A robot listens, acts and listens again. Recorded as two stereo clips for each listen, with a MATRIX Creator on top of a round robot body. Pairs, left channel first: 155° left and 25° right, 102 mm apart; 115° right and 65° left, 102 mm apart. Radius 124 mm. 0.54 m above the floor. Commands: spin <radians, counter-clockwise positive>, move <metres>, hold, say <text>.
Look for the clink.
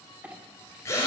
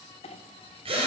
spin -1.75
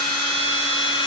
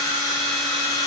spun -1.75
hold
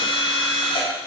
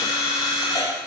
hold
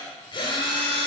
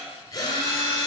say Facing where the clink came from. I can't hear it now.